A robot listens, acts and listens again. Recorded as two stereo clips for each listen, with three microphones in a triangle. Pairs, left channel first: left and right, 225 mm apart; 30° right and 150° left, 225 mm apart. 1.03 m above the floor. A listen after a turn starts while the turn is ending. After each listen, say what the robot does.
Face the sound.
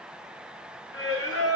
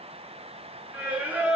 Turn 65° left.
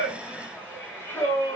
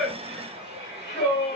Turn 10° left.
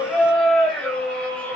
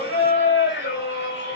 Found it: singing, straight ahead.